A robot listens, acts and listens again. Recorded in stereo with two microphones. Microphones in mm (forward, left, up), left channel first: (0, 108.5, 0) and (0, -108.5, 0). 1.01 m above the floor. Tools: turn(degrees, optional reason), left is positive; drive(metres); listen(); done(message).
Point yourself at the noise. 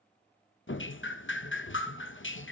turn(degrees=65, reason="The dripping: about 65° left or 115° left.")
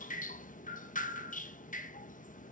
turn(degrees=40, reason="So it is at 40° left.")
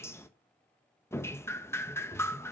turn(degrees=10, reason="The dripping is now 10° left.")
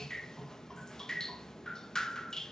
done("Found it: dripping, straight ahead, under 1 m away.")